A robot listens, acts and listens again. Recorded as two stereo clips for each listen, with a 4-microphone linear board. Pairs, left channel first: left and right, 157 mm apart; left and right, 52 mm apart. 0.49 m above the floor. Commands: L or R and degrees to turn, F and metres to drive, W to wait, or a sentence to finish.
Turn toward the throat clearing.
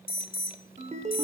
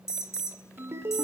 W
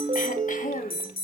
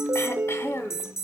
L55
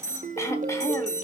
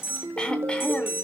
L20
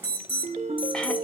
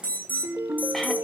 W
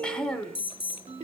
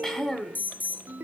Facing the throat clearing.